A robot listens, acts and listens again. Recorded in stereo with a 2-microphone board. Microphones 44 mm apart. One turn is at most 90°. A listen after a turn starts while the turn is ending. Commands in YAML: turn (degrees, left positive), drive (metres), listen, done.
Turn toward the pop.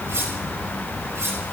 listen: true
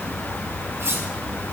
listen: true
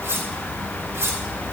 done: "I can't make out a pop, only cutlery clinking."